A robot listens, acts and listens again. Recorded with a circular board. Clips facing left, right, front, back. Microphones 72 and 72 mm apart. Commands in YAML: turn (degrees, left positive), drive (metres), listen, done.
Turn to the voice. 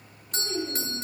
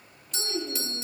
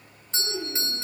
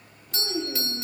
turn: 175
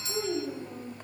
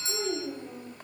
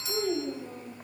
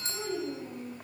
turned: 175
turn: -20
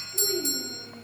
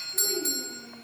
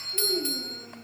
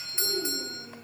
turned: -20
done: "Found it: a child speaking, straight ahead, over 4 m away."